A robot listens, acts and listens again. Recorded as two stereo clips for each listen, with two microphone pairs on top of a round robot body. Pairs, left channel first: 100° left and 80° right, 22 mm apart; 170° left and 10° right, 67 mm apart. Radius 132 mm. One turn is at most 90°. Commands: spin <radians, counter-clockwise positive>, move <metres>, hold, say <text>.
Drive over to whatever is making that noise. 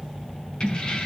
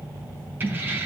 spin 0.87
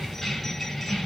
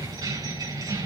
spin 0.26
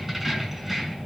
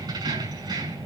move 1.0
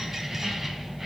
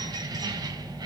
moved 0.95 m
move 1.0
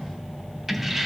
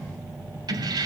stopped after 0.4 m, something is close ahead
say Blocked. The keys jangling is further on, straight ahead.